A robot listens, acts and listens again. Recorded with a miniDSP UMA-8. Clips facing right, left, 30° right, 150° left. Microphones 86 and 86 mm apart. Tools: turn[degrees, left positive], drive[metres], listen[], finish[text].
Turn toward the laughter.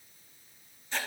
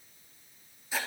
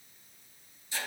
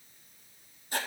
Action: listen[]
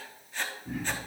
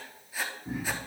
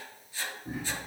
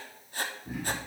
Thought: The laughter: 25° left.
Action: turn[25]
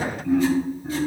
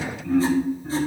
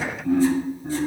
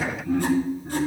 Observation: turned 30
Thought: The laughter is now 15° right.
Action: turn[-15]
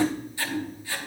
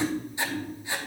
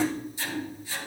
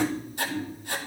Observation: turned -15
Action: finish[Facing the laughter, 2 to 4 m away.]